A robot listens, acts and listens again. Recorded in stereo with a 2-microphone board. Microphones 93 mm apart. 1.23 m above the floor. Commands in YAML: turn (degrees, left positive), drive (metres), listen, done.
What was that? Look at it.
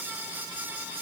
listen: true
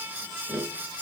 turn: 15
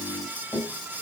turn: 150
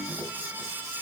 turn: -35
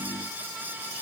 listen: true
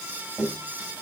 turn: -15
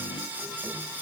listen: true
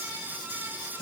listen: true
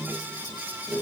done: "Found it: tapping, straight ahead, 1 to 2 m away."